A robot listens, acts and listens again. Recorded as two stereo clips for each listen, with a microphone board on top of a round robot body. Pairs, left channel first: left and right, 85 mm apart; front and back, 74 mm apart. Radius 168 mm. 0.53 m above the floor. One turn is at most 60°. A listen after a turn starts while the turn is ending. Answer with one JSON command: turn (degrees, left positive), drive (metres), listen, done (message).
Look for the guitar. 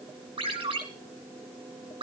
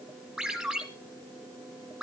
{"listen": true}
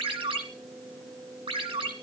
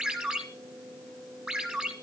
{"listen": true}
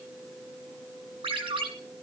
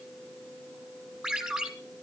{"done": "I can't make out a guitar, only a ringtone."}